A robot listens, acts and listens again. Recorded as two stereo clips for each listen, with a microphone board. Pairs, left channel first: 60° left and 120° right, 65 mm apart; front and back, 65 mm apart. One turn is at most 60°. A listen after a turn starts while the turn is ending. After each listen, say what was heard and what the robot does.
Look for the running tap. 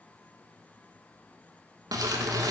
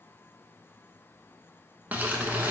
Keep listening.
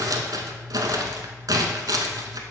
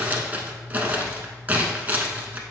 Keep listening.
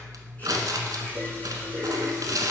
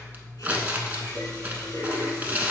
Facing the running tap, 2 to 4 m away.